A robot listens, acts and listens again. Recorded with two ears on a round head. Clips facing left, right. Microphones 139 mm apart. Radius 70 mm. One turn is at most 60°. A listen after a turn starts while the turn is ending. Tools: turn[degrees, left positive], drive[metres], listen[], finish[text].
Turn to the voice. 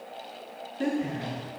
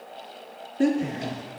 Thought: The woman speaking: about 50° right or 130° right.
Action: turn[-50]
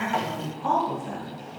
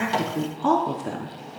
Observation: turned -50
Thought: So it is at 80° right.
Action: turn[-60]
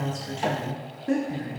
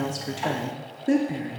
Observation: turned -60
Thought: The woman speaking is now 30° right.
Action: turn[-30]
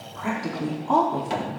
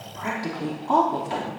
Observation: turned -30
Action: finish[Facing the woman speaking, 1 to 2 m away.]